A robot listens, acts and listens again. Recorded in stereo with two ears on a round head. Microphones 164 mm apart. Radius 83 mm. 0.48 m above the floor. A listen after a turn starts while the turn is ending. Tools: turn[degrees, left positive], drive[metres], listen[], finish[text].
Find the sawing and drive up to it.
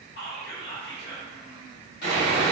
Thought: The sawing: about 55° left or 125° left.
Action: turn[55]
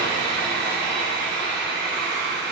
Action: drive[1.0]
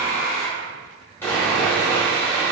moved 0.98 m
Thought: The sawing is now 15° left.
Action: turn[15]
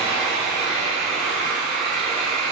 Action: drive[1.0]
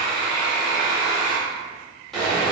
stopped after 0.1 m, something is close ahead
Action: finish[I am next to the sawing.]